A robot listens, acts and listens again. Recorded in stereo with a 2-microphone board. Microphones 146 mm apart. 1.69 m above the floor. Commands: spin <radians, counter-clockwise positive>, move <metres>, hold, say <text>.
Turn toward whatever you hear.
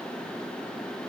hold
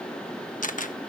spin 1.13
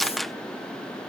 say Facing the camera shutter.